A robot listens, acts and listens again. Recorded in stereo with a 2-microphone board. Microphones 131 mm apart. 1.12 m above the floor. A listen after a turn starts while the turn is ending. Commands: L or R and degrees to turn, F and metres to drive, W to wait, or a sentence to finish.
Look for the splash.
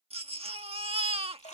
L65
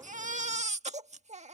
W
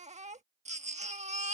I heard a splash, but can't make it out now. It was about straight ahead or 50° left.